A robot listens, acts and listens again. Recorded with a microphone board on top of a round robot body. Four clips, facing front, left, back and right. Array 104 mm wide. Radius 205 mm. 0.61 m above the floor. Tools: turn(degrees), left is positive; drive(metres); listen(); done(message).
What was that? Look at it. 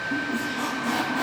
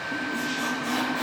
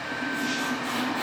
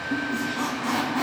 turn(degrees=-65)
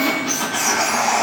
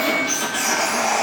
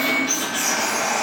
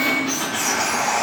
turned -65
turn(degrees=-15)
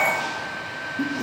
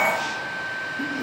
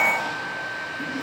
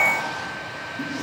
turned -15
listen()
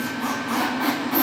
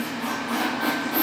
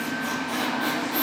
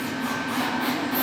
done("Facing the squeak, 2 to 4 m away.")